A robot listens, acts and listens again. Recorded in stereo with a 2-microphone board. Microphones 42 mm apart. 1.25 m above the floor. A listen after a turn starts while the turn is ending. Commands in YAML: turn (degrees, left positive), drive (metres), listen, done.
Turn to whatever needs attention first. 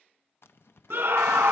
turn: -60
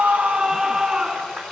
turn: -20
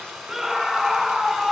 done: "Facing the scream, 1 to 2 m away."